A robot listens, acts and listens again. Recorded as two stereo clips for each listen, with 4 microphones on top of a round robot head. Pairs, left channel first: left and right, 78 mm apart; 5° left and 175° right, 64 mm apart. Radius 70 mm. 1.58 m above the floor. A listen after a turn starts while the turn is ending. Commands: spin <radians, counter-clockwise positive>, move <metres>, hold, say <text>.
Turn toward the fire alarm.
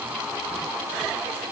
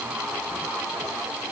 hold
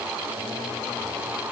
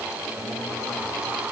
hold
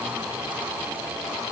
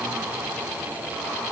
say I can't make out a fire alarm to turn to.